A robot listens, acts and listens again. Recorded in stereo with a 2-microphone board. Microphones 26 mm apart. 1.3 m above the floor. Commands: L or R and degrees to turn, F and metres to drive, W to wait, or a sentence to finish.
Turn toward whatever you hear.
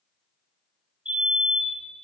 R50
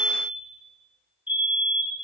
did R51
R80
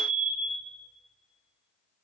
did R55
R25
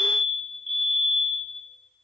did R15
R10
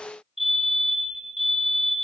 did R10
Found it: a fire alarm, straight ahead.